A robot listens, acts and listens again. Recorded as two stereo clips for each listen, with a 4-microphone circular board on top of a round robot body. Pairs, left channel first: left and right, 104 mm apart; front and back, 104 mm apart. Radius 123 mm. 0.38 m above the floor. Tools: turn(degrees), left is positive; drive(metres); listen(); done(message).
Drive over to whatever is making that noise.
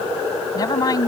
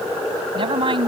turn(degrees=145)
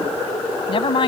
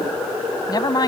turn(degrees=55)
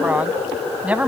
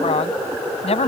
turn(degrees=-15)
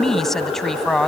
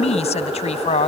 drive(metres=1.0)
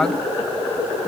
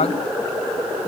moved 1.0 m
listen()
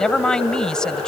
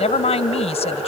drive(metres=1.0)
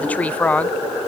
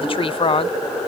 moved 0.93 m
turn(degrees=15)
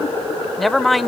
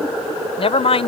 drive(metres=1.0)
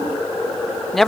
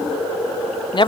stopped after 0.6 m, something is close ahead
done("I am next to the woman speaking.")